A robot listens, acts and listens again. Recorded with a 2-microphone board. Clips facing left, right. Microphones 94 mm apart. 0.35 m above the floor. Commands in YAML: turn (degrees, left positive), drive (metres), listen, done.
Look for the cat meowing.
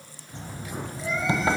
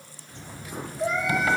turn: -60
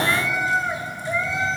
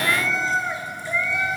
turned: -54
turn: 25
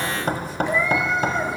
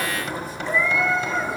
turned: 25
turn: 20
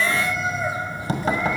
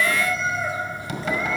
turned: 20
turn: 10
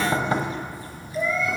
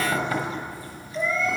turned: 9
done: "Found it: a cat meowing, straight ahead."